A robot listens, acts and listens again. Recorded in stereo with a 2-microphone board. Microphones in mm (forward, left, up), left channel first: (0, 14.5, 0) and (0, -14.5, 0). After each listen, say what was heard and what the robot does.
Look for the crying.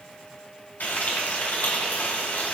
Keep listening.
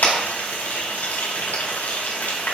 Keep listening.
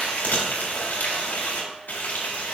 I can't make out crying, only frying.